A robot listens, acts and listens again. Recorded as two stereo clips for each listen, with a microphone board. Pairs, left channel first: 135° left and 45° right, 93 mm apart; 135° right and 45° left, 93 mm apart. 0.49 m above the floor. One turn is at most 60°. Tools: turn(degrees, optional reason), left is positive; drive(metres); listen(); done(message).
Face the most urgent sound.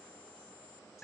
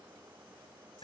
listen()
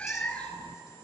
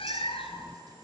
listen()
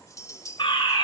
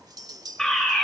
turn(degrees=60, reason="The fire alarm: 140° left.")
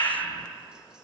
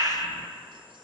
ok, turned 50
turn(degrees=60, reason="The fire alarm is now 90° left.")
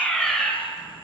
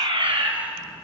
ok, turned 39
turn(degrees=50, reason="The fire alarm is now 50° left.")
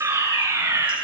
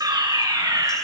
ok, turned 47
done("Facing the fire alarm, 2 to 4 m away.")